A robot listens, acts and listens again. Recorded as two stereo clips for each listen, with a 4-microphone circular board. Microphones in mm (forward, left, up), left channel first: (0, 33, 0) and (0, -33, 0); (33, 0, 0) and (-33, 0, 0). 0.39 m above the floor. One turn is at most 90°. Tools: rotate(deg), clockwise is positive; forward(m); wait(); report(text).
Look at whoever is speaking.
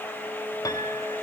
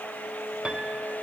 wait()
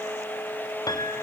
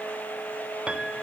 wait()
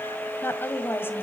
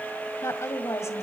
rotate(-40)
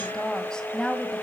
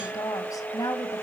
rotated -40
rotate(-10)
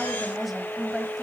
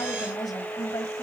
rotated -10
report("Found it: a woman speaking, straight ahead, 1 to 2 m away.")